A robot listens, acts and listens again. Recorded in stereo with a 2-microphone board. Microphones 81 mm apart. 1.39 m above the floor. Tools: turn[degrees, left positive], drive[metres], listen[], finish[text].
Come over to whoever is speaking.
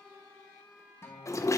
Action: listen[]
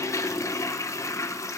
Action: listen[]
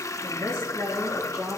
Thought: The woman speaking: about 40° right or 140° right.
Action: turn[-40]
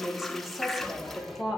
Action: drive[1.0]
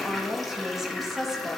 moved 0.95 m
Action: drive[1.0]
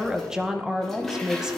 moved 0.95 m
Thought: The woman speaking is now 10° right.
Action: turn[-10]
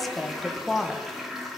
Action: drive[1.0]
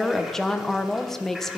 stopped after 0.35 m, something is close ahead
Action: finish[I am next to the woman speaking.]